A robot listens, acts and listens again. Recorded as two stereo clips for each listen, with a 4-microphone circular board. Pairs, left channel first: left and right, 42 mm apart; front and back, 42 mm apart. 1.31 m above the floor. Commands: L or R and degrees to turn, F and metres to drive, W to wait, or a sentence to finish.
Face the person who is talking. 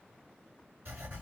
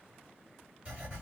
W
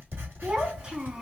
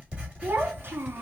R155
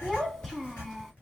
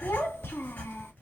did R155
Facing the child speaking.